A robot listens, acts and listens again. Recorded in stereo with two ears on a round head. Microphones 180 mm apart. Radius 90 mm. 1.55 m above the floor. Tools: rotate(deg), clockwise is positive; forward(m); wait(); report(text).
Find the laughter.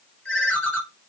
wait()
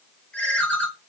wait()
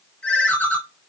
report("I can't make out laughter, only a ringtone.")